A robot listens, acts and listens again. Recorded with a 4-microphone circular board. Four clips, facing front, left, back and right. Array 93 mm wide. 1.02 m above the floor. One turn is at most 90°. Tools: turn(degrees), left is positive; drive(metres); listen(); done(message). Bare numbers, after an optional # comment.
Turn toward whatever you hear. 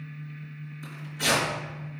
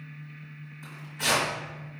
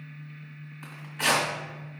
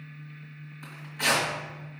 # The tearing paper: 175° right.
turn(-90)
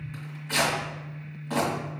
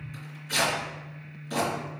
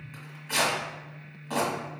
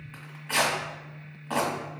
# The tearing paper is now 100° right.
turn(-90)
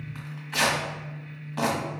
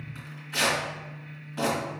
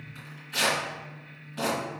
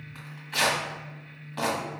# The tearing paper is now 35° right.
turn(-35)
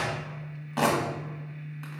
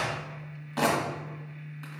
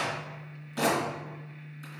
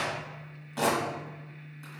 # The tearing paper is now 15° left.
turn(15)
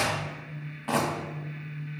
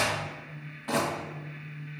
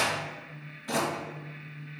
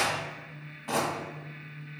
done("Facing the tearing paper, 1 to 2 m away.")